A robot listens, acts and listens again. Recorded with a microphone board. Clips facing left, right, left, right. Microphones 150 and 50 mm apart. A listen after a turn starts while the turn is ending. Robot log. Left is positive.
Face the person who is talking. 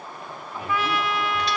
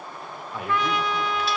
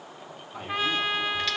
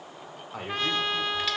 note: The man speaking: about 70° right or 110° right.
cmd yaw -70
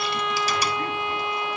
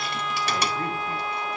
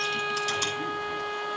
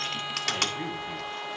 cmd idle
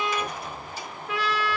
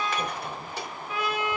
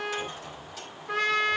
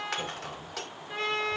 cmd idle
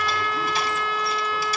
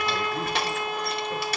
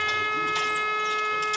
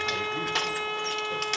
end: I heard a man speaking, but can't make it out now. It was about straight ahead or 40° right.